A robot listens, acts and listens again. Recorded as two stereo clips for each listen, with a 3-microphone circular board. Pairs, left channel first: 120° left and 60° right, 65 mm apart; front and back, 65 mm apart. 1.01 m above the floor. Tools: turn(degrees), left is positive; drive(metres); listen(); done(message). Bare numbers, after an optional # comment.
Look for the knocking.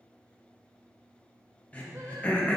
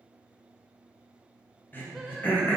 listen()
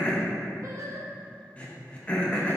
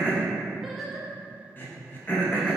listen()
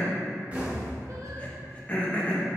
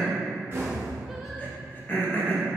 # The knocking: 125° right.
turn(-125)
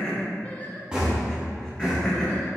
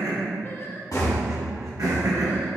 # The knocking is now 15° left.
turn(15)
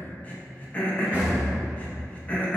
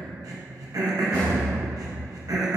done("Facing the knocking, 1 to 2 m away.")